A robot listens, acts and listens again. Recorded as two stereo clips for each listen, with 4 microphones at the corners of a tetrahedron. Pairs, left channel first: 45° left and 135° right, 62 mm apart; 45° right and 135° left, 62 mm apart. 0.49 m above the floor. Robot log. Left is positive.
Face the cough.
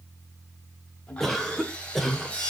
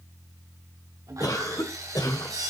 note: The cough: 40° right.
cmd yaw -40
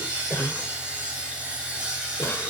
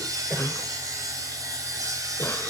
end: Found it: a cough, straight ahead, 1 to 2 m away.